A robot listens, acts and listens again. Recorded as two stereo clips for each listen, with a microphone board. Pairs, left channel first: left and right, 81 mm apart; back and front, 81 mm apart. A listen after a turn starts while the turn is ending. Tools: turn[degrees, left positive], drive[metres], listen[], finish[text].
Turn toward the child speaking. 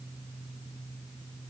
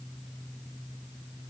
Action: listen[]
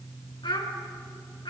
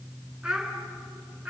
Thought: The child speaking: 75° left.
Action: turn[75]
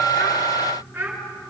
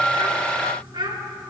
Thought: The child speaking is now 25° right.
Action: turn[-25]
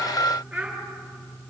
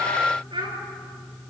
Thought: The child speaking is now 10° right.
Action: turn[-10]
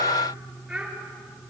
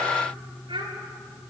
Action: finish[Found it: a child speaking, straight ahead.]